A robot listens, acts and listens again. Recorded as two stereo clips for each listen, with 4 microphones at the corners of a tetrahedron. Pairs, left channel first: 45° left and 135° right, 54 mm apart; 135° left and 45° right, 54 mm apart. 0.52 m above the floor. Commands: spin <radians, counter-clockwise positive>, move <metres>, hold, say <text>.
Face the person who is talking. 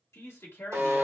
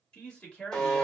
spin 1.22
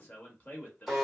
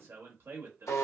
spin -0.17
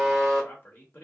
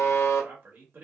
say Found it: a man speaking, straight ahead, 1 to 2 m away.